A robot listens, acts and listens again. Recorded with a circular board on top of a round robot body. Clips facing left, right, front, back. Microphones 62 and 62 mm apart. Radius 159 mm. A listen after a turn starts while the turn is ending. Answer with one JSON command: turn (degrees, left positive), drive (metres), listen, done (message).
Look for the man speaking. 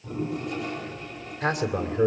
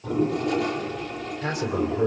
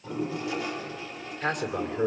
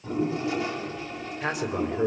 {"turn": 95}
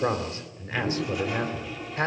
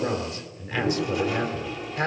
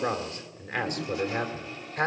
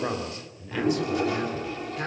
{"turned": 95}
{"turn": 35}
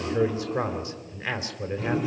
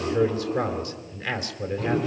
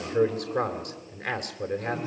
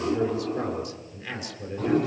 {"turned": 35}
{"turn": 25}
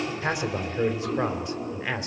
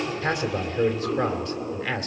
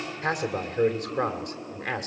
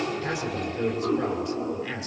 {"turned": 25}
{"turn": 20}
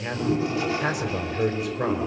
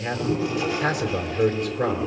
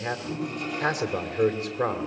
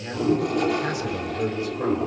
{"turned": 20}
{"done": "Facing the man speaking, 2 to 4 m away."}